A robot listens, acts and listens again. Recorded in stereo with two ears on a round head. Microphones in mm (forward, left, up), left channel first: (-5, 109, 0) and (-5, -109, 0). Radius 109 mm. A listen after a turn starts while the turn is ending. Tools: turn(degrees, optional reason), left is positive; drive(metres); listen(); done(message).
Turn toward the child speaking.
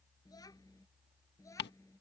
turn(degrees=30)
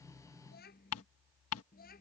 turn(degrees=140, reason="So it is at 140° left.")
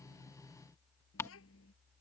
turn(degrees=60, reason="The child speaking is now 60° left.")
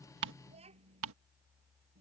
turn(degrees=-25, reason="The child speaking is now 25° right.")
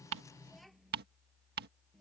done("Facing the child speaking.")